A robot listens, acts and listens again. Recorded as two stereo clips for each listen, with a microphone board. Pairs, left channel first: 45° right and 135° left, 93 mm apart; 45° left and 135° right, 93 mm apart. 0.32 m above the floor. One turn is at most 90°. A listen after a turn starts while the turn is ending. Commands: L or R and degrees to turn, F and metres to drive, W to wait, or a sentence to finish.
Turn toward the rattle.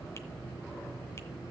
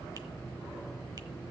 W
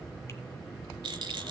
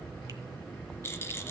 L90
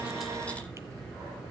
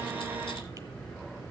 L15
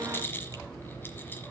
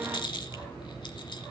L20
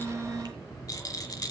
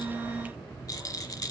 Facing the rattle, 1 to 2 m away.